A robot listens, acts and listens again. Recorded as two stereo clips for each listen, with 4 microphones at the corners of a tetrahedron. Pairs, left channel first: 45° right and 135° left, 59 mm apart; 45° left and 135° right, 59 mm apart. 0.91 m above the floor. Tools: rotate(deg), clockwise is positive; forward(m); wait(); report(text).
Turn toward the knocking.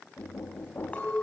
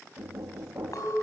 rotate(95)
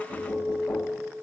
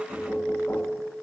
wait()
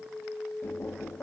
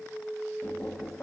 report("Found it: knocking, straight ahead.")